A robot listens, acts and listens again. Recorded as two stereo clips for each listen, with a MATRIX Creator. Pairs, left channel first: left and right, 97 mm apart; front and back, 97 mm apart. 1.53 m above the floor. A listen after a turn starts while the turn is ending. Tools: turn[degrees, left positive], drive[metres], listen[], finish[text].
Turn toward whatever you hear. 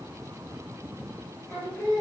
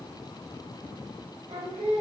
Thought: The singing: 160° left.
Action: turn[160]
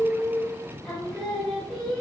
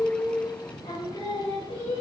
Thought: The singing is now 10° left.
Action: turn[10]
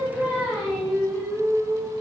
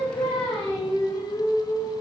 Action: finish[Facing the singing, under 1 m away.]